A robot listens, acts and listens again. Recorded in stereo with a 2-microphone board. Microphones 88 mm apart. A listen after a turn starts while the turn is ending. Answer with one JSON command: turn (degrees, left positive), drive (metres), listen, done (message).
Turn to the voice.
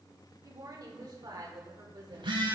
{"turn": -55}
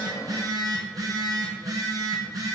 {"listen": true}
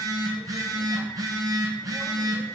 {"listen": true}
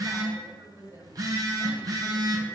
{"turn": -50}
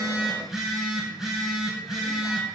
{"listen": true}
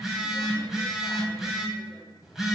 {"listen": true}
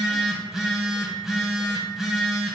{"done": "Facing where the woman speaking came from. I can't hear it now."}